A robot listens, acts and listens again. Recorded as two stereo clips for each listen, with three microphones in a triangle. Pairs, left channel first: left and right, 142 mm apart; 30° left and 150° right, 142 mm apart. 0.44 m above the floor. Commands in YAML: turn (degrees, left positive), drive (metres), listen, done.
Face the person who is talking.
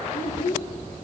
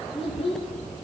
turn: 80
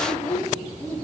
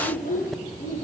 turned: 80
done: "Facing the child speaking."